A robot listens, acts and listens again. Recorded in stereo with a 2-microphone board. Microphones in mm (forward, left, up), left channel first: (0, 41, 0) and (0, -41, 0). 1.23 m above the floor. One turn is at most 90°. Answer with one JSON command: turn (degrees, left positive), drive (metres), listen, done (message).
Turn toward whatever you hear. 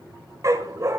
{"turn": -40}
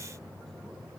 {"listen": true}
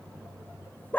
{"turn": 25}
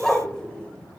{"turn": 10}
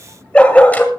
{"turn": 20}
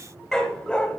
{"turn": 10}
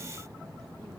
{"listen": true}
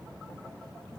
{"listen": true}
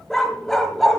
{"done": "Facing the dog barking, 2 to 4 m away."}